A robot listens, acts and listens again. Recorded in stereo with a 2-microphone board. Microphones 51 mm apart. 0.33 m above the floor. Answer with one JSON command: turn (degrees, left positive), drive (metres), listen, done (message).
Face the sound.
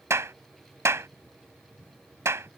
{"turn": -60}
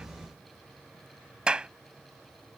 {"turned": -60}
{"turn": -20}
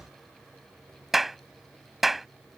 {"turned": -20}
{"done": "Facing the clap."}